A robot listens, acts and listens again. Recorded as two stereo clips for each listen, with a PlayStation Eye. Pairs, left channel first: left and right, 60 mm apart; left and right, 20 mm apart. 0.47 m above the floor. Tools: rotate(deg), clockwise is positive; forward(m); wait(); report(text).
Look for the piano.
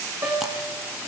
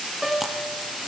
rotate(45)
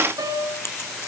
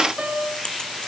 rotate(90)
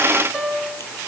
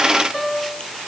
report("Facing the piano.")